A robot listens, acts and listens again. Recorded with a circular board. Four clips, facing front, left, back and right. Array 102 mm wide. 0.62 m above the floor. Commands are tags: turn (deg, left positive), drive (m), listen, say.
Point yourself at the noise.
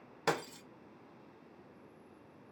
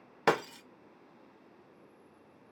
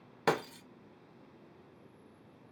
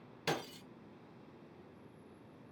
<turn deg="105"/>
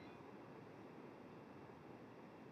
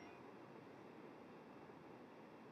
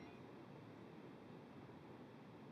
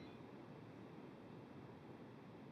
<say>Facing where the breaking glass came from. I can't hear it now.</say>